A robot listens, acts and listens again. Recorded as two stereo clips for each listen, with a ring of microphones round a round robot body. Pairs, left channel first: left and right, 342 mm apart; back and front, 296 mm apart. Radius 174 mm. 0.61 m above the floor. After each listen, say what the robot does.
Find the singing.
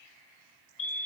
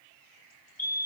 Keep listening.
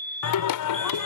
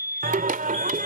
Turn 60° left.
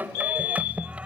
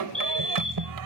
Found it: singing, straight ahead.